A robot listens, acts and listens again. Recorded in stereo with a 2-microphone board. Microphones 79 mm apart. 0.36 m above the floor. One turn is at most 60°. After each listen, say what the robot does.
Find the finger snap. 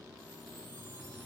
Keep listening.
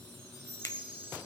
Turn 40° left.
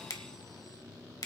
Turn 60° left.
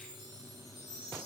Turn 30° left.
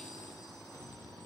Keep listening.
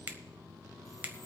Turn 30° right.
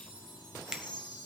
Turn 10° right.
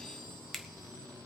Found it: a finger snap, straight ahead, 1 to 2 m away.